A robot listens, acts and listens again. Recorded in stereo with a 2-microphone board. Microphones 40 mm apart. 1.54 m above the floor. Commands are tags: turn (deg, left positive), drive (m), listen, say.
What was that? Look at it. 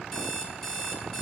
<turn deg="30"/>
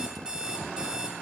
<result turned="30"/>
<turn deg="-20"/>
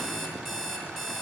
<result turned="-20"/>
<say>Found it: an alarm clock, straight ahead.</say>